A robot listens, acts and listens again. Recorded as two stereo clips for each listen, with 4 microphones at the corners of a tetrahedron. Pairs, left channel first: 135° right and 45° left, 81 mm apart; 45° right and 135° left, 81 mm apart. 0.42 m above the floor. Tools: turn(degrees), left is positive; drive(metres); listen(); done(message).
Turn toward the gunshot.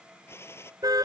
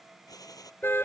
turn(degrees=-80)
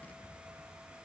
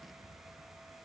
done("Facing where the gunshot came from. I can't hear it now.")